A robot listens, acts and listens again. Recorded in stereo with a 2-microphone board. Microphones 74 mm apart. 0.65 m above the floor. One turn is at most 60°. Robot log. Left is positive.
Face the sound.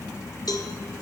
note: The cowbell: about 55° left or 125° left.
cmd yaw +55
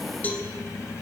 note: So it is at 25° left.
cmd yaw +25
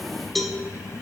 end: Facing the cowbell.